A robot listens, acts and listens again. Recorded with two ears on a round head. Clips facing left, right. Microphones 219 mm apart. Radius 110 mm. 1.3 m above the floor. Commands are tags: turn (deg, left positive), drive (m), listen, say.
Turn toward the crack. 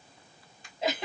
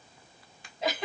<turn deg="-50"/>
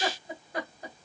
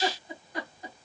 <listen/>
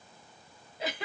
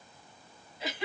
<say>I heard a crack, but can't make it out now. It was about straight ahead or 80° right.</say>